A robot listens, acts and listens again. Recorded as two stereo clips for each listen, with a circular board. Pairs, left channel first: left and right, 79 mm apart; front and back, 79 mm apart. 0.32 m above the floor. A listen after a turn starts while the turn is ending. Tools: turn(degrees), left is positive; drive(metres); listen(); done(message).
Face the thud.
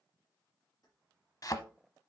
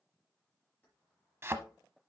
turn(degrees=125)
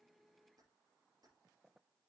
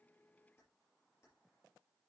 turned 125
done("I heard a thud from this way, but can't make it out now.")